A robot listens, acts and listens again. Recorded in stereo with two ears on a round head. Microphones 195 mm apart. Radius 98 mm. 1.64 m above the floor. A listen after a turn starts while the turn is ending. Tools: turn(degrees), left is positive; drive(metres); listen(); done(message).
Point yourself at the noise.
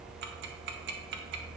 turn(degrees=-55)
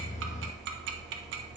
turn(degrees=-60)
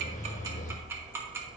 turn(degrees=-10)
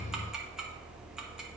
done("Found it: ticking, straight ahead, 1 to 2 m away.")